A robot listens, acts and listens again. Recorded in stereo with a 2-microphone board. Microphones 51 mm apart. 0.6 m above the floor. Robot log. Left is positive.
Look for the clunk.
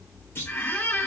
note: The clunk: about 50° left or 130° left.
cmd yaw +50
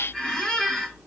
cmd idle
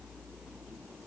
end: I heard a clunk, but can't make it out now. It was about straight ahead or 80° left.